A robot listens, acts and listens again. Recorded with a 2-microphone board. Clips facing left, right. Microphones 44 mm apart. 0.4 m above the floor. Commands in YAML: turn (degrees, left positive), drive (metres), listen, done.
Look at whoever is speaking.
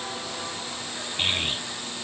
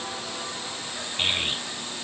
turn: 30
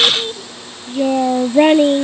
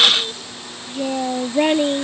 turn: 160
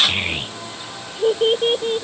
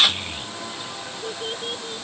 turn: 50
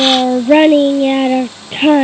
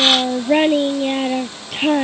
turn: 25
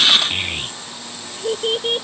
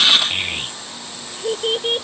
done: "Facing the child speaking."